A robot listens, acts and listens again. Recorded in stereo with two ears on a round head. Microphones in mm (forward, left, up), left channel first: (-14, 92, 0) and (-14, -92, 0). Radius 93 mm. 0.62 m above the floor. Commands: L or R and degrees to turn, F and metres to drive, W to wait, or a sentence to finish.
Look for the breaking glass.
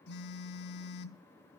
W
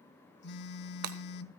R70
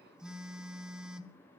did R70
W
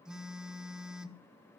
I heard breaking glass, but can't make it out now. It was about straight ahead or 40° right.